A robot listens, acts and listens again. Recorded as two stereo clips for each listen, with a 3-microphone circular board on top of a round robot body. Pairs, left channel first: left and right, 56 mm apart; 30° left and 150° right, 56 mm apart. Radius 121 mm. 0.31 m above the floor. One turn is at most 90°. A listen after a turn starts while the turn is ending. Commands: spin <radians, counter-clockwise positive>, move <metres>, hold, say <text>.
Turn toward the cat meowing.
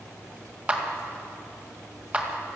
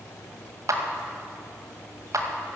hold
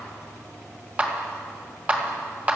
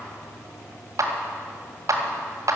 hold
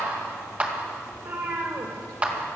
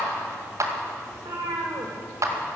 spin -1.57
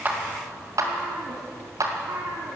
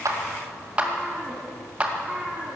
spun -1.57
spin -1.22
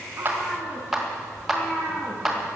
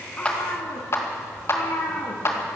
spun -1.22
spin 0.17
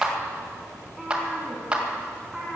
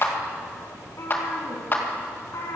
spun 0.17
say Found it: a cat meowing, straight ahead, over 4 m away.